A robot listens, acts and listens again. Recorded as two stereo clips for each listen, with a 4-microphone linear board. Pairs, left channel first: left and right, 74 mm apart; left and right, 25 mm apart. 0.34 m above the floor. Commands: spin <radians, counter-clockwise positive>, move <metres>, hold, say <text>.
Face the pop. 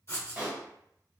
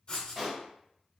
spin -0.35
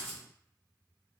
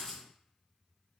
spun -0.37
hold
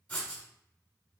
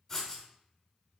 say I heard a pop, but can't make it out now. It was about straight ahead or 135° right.